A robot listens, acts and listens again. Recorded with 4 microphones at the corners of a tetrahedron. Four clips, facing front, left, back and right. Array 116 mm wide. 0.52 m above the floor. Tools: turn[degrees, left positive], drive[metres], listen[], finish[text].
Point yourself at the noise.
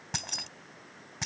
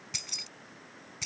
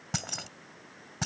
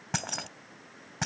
Thought: The keys jangling: 105° right.
Action: turn[-105]
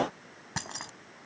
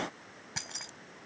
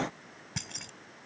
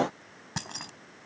Thought: The keys jangling is now 35° right.
Action: turn[-35]
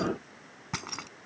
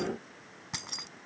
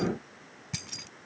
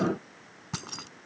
Thought: The keys jangling is now 20° right.
Action: turn[-20]
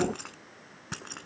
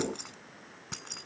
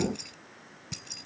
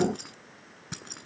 Action: finish[Found it: keys jangling, straight ahead.]